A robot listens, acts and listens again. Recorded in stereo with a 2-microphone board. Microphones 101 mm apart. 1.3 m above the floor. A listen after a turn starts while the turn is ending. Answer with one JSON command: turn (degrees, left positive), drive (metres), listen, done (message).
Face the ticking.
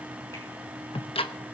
{"turn": 65}
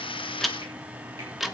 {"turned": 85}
{"done": "Found it: ticking, straight ahead, under 1 m away."}